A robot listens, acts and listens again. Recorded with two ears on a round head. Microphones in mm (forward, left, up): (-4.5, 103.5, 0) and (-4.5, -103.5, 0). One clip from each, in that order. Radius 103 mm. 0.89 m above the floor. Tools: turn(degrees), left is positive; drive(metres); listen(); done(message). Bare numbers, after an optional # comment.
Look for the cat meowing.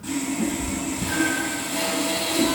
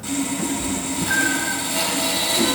# The cat meowing: about 65° right or 115° right.
turn(-65)
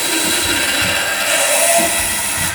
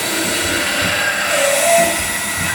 listen()
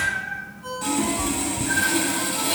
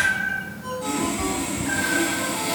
# So it is at 35° right.
turn(-35)
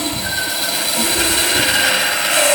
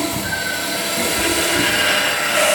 done("Facing the cat meowing.")